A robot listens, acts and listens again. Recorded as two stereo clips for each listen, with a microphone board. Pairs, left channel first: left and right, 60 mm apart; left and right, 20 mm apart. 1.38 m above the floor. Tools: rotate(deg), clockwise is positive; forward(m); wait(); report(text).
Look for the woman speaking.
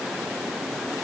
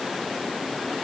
wait()
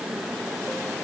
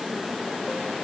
wait()
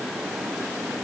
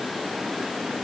report("I can't make out a woman speaking.")